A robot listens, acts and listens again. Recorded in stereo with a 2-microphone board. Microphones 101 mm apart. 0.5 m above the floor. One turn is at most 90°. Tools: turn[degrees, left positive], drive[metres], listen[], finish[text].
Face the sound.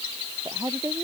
Thought: The woman speaking: about 25° right or 155° right.
Action: turn[-25]
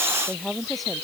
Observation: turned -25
Action: finish[Found it: a woman speaking, straight ahead.]